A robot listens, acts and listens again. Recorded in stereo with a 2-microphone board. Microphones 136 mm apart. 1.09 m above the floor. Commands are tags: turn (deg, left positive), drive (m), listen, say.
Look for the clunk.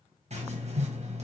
<listen/>
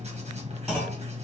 <turn deg="30"/>
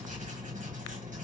<listen/>
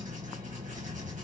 <say>I heard a clunk, but can't make it out now. It was about 30° right or 150° left.</say>